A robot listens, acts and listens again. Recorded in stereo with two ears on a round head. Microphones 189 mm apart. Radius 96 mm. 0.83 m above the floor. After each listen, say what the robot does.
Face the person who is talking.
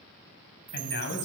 Turn 60° left.
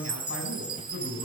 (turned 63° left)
Turn 55° left.
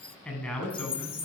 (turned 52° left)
Facing the man speaking, over 4 m away.